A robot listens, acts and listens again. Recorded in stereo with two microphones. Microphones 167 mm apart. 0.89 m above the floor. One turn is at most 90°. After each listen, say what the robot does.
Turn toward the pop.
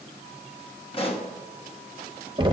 Turn 35° left.
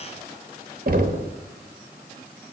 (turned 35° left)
Keep listening.
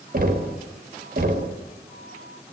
I heard a pop, but can't make it out now. It was about straight ahead or 110° left.